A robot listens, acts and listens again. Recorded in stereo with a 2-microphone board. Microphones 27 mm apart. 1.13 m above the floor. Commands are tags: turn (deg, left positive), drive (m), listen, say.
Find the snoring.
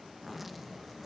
<listen/>
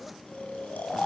<turn deg="90"/>
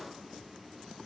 <listen/>
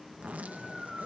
<turn deg="-10"/>
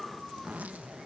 <say>Facing the snoring, 2 to 4 m away.</say>